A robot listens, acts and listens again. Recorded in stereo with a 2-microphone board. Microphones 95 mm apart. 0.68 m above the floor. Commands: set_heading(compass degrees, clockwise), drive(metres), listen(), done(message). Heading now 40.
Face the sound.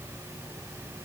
listen()
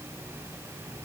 listen()
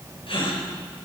set_heading(330)
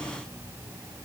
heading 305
listen()
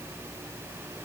done("I heard a gasp, but can't make it out now. It was about 15° left or 25° right.")